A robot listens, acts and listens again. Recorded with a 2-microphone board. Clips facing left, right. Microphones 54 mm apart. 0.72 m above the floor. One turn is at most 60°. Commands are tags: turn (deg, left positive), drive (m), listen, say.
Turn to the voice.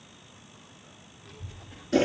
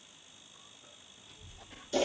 <turn deg="60"/>
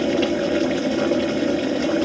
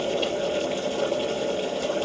<turn deg="30"/>
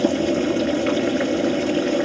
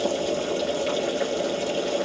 <listen/>
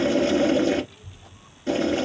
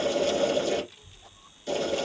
<say>Found it: a child speaking, straight ahead.</say>